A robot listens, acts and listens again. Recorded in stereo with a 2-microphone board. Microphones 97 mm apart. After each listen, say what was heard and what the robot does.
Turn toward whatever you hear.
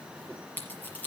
The scissors: about 15° left or 165° left. Turn 15° left.
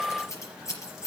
So it is at 150° left. Turn 150° left.
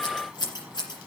The scissors is now 45° left. Turn 45° left.
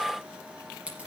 The scissors is now 10° right. Turn 10° right.
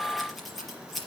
Found it: scissors, straight ahead.